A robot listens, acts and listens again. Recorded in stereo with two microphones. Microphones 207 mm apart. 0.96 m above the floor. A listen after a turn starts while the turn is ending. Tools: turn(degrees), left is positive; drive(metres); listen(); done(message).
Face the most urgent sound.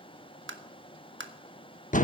listen()
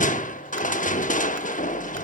listen()
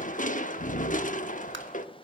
done("I can't make out anything urgent, only tapping and crushing.")